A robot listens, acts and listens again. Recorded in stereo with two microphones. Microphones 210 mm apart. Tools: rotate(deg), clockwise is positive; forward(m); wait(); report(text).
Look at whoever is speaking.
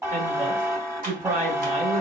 rotate(40)
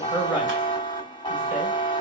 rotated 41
rotate(10)
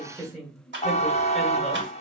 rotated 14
report("Found it: a woman speaking, straight ahead.")